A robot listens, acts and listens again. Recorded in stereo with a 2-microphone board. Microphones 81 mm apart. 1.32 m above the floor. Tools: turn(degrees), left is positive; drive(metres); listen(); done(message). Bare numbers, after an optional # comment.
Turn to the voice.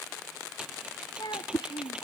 # The child speaking: about 65° left or 115° left.
turn(65)
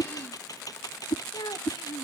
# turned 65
# So it is at 75° left.
turn(75)
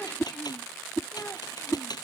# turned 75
listen()
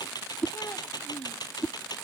listen()
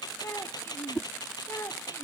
# The child speaking is now 35° left.
turn(35)
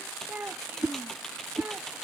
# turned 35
# The child speaking is now 20° right.
turn(-20)
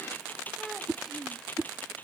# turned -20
done("Found it: a child speaking, straight ahead.")